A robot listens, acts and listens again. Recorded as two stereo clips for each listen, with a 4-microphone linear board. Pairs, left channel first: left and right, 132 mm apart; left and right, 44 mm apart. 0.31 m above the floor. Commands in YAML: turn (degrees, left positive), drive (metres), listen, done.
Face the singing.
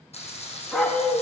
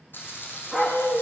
turn: 70
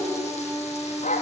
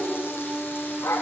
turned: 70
done: "Facing the singing, 2 to 4 m away."